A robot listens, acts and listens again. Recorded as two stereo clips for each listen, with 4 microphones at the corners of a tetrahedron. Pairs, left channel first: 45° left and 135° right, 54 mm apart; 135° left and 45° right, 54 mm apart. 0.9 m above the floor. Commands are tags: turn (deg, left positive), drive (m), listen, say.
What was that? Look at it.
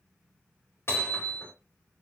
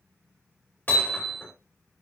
<turn deg="80"/>
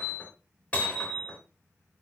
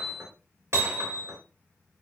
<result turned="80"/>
<turn deg="-15"/>
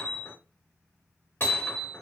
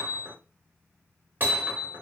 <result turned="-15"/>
<say>Facing the hammering, 2 to 4 m away.</say>